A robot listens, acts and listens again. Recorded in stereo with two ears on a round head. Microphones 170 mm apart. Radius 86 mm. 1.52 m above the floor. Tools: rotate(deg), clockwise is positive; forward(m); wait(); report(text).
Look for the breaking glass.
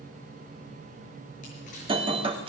rotate(25)
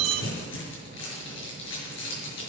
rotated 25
rotate(125)
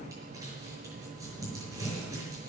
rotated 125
report("I heard breaking glass from this way, but can't make it out now.")